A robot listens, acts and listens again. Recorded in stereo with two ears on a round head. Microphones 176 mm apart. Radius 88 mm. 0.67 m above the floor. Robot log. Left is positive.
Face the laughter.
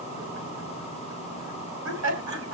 note: The laughter: about 75° right or 105° right.
cmd yaw -75
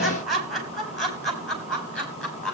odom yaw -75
end: Found it: laughter, straight ahead.